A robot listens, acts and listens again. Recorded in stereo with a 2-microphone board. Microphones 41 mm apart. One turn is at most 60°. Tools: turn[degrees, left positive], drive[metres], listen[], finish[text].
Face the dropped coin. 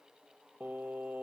Action: listen[]
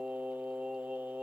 Action: listen[]
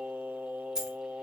Thought: The dropped coin: about 15° right or 165° right.
Action: turn[-15]
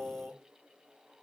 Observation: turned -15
Action: listen[]
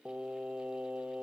Action: finish[I heard a dropped coin, but can't make it out now. It was about straight ahead or 150° right.]